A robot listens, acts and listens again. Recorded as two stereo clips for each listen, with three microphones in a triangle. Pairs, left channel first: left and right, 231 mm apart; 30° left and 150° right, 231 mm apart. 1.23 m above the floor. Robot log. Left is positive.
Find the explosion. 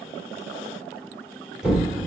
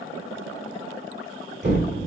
note: The explosion: 175° right.
cmd yaw -175
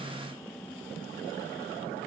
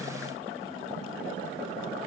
end: I heard an explosion from this way, but can't make it out now.